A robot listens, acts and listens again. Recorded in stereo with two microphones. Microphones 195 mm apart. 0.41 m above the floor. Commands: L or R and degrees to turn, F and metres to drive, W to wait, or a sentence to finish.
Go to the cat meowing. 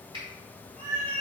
L30
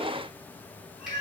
L145
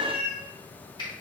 R10
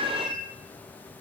F1.0
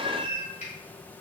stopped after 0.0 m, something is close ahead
Blocked. The cat meowing is further on, straight ahead.